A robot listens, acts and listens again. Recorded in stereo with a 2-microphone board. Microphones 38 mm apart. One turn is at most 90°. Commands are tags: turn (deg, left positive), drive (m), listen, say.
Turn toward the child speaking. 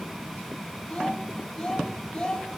<turn deg="25"/>
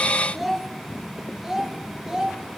<turn deg="-15"/>
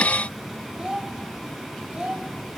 <turn deg="-25"/>
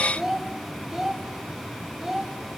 <turn deg="-10"/>
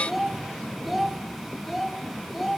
<say>Found it: a child speaking, straight ahead.</say>